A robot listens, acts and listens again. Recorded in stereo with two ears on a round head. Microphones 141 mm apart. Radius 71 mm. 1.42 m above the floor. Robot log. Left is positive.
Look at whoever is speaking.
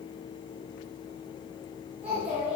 cmd yaw -30
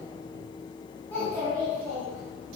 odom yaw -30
note: So it is at 10° left.
cmd yaw +10
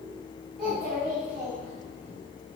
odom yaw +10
end: Facing the child speaking.